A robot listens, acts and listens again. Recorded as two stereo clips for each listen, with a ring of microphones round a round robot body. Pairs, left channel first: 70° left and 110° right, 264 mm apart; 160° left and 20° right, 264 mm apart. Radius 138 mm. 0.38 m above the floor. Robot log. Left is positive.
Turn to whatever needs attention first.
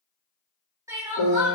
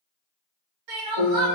note: The crying: 35° right.
cmd yaw -35
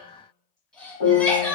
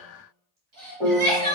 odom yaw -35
note: The crying is now 20° right.
cmd yaw -20
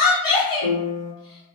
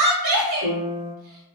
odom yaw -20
end: Facing the crying, 1 to 2 m away.